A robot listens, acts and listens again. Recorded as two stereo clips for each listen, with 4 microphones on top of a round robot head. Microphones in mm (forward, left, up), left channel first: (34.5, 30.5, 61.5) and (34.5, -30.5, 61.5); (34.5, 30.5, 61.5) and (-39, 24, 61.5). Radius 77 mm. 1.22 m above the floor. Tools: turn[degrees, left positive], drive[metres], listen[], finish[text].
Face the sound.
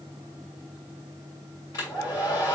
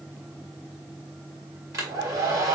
Thought: The hair dryer: 145° left.
Action: turn[145]
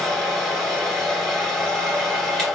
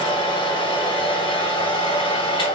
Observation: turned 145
Action: finish[Found it: a hair dryer, straight ahead, 1 to 2 m away.]